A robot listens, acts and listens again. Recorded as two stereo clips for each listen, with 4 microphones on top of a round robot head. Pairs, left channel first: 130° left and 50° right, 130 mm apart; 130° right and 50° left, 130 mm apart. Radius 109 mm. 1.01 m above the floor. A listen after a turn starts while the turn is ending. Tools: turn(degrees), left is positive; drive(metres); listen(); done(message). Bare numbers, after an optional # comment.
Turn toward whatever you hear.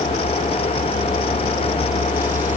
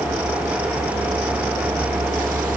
listen()
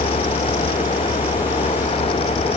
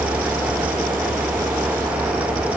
listen()
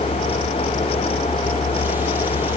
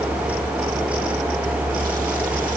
done("I can't make out anything to turn to.")